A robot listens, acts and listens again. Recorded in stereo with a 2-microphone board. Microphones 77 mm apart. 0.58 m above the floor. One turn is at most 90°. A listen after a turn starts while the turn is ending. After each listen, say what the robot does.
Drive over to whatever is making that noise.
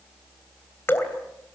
Turn 25° left.
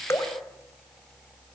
Keep listening.
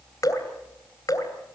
Turn 90° left.
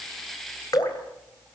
Turn 60° left.
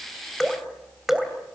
Drive 1.0 m forward.
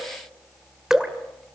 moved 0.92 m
Drive 1.0 m forward.
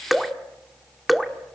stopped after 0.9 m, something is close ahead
I am next to the dripping.